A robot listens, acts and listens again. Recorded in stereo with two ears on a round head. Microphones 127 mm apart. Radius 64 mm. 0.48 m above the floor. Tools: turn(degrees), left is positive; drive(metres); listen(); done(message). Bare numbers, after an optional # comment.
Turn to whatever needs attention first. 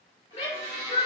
# The shout: about 40° left or 140° left.
turn(40)
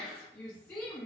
# So it is at 10° left.
turn(10)
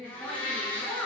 done("Facing the shout, 1 to 2 m away.")